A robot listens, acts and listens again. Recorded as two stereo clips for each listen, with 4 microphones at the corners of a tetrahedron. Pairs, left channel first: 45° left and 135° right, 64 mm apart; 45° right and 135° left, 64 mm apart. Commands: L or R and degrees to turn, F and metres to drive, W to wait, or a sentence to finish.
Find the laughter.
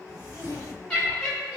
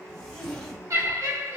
L140
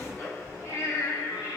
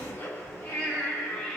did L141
L35
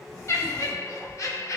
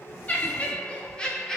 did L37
L35
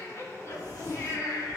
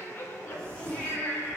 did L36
L15
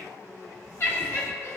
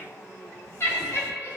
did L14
Facing the laughter, 1 to 2 m away.